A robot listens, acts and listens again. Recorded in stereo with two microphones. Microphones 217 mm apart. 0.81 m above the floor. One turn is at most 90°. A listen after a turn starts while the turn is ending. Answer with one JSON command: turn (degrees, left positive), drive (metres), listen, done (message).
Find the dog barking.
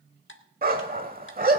{"turn": -45}
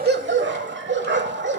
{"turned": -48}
{"turn": -80}
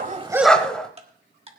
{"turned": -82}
{"done": "Facing the dog barking."}